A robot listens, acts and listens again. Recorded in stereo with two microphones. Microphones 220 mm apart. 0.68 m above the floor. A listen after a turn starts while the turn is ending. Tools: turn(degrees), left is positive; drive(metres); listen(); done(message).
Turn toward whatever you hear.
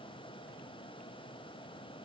listen()
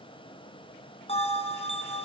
turn(degrees=30)
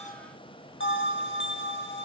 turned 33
turn(degrees=120)
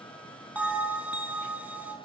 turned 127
done("Found it: a bell, straight ahead, over 4 m away.")